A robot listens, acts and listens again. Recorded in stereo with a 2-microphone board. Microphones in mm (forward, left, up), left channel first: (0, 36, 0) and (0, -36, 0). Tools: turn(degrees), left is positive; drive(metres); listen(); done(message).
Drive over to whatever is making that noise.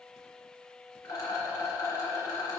turn(degrees=50)
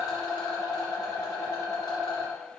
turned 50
turn(degrees=80)
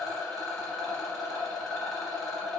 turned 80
drive(metres=1.0)
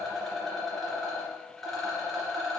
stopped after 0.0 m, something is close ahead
done("Blocked. The rattle is further on, straight ahead.")